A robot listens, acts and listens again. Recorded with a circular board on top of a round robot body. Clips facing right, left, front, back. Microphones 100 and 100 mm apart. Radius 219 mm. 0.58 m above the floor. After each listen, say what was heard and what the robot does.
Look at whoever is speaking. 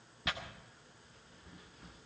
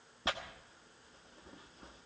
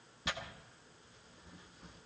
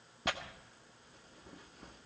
Keep listening.
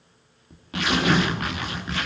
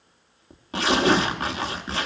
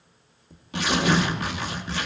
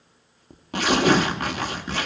Keep listening.
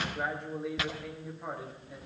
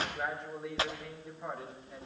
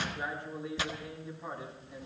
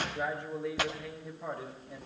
The man speaking: straight behind. Turn 180° left.
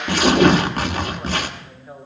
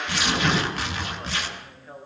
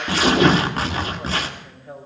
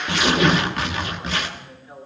The man speaking is now 15° right. Turn 15° right.
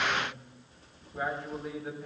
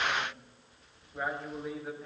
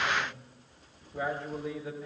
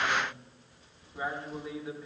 Facing the man speaking.